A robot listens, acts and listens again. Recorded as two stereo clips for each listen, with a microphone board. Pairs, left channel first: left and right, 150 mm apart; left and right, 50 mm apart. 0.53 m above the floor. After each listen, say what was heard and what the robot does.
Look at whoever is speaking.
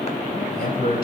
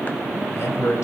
The man speaking: about 70° left or 110° left. Turn 70° left.
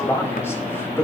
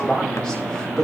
So it is at 15° left. Turn 15° left.
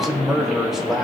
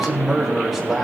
Found it: a man speaking, straight ahead, 2 to 4 m away.